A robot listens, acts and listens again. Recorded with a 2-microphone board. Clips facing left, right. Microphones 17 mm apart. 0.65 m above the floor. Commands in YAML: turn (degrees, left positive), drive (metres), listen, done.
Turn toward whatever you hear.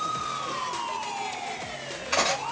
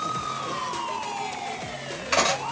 turn: -30
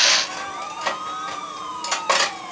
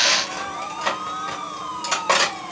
done: "Found it: cutlery clinking, straight ahead."